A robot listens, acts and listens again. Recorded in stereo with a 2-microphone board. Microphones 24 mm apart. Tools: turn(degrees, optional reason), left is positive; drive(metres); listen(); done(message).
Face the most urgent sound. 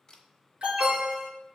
turn(degrees=-40, reason="The alarm: about 40° right or 140° right.")
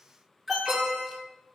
done("Facing the alarm, 2 to 4 m away.")